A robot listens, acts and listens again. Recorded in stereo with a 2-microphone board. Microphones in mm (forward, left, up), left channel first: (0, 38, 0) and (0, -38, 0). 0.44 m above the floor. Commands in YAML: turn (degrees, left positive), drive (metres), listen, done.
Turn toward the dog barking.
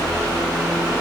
listen: true
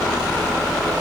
listen: true
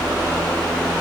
done: "I can't make out a dog barking to turn to."